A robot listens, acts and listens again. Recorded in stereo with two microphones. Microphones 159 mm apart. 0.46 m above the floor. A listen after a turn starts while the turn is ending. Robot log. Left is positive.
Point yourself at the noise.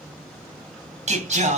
note: The singing: about 50° right or 130° right.
cmd yaw -50
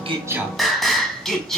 end: Facing the singing.